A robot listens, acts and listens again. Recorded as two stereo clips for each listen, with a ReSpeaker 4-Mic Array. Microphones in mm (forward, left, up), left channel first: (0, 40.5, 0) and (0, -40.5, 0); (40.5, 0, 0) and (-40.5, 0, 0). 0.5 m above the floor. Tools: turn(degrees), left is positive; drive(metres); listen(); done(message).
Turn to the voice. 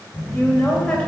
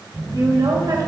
turn(degrees=165)
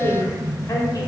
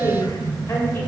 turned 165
turn(degrees=45)
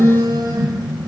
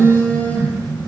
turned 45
listen()
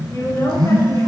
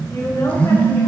turn(degrees=40)
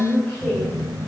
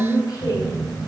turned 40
turn(degrees=20)
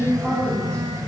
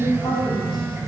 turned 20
listen()
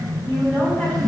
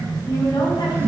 turn(degrees=10)
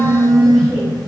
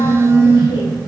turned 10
listen()
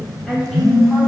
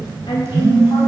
done("Found it: a woman speaking, straight ahead, 2 to 4 m away.")